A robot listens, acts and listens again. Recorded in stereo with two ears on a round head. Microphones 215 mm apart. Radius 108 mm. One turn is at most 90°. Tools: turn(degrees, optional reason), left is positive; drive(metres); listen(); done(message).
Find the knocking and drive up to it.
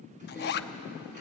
listen()
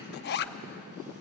listen()
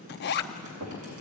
turn(degrees=-90)
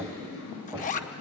turn(degrees=-15, reason="So it is at 15° right.")
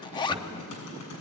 listen()
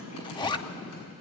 listen()
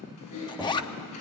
done("I heard knocking from this way, but can't make it out now. I did not reach it.")